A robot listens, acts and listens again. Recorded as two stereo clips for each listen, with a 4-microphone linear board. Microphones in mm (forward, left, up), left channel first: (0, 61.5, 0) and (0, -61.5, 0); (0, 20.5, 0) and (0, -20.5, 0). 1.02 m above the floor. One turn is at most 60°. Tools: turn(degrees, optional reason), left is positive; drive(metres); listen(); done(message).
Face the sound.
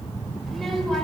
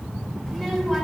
turn(degrees=30)
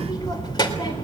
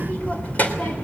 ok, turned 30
turn(degrees=60, reason="So it is at 140° left.")
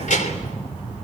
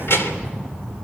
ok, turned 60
turn(degrees=60, reason="The child speaking is now 85° left.")
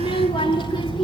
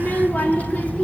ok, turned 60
turn(degrees=40, reason="The child speaking is now 40° left.")
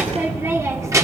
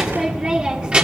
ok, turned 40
turn(degrees=-25, reason="The child speaking is now 25° right.")
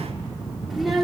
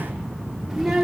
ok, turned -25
done("Found it: a child speaking, straight ahead.")